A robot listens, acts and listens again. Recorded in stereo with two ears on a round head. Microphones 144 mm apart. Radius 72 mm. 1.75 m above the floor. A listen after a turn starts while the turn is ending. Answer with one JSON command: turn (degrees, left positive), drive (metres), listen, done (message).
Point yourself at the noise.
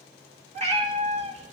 {"turn": -45}
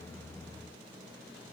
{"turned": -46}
{"listen": true}
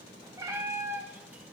{"turn": -15}
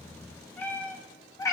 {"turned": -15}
{"turn": 20}
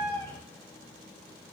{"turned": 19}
{"turn": 15}
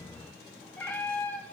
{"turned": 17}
{"turn": 10}
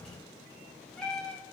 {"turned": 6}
{"done": "Facing the cat meowing, 1 to 2 m away."}